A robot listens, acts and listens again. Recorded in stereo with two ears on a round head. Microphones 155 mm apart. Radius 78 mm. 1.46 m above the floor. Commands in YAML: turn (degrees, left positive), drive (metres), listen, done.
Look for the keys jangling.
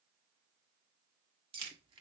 turn: -35
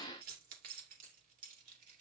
turn: -130
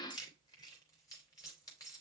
turn: 20
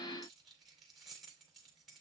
done: "Facing the keys jangling, 2 to 4 m away."